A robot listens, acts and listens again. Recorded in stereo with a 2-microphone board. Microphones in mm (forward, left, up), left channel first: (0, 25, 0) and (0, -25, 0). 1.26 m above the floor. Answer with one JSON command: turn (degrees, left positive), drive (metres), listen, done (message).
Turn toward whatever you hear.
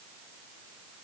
{"listen": true}
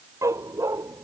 {"turn": -90}
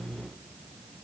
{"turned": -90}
{"listen": true}
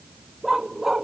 {"done": "Found it: a dog barking, straight ahead."}